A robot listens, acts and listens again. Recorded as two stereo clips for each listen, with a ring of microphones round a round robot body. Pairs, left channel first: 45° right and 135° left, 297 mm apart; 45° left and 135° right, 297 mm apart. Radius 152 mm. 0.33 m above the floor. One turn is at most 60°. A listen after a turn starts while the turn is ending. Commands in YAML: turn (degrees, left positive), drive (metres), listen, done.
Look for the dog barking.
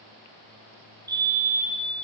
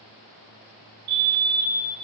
listen: true
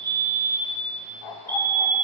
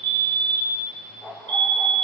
turn: -45
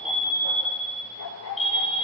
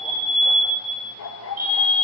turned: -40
done: "Found it: a dog barking, straight ahead, 2 to 4 m away."